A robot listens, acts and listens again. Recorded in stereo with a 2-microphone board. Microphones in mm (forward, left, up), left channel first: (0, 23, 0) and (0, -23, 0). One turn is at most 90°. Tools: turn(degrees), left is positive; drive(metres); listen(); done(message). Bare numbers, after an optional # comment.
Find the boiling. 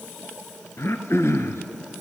listen()
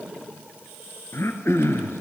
listen()
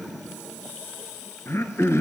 done("I can't make out boiling, only throat clearing.")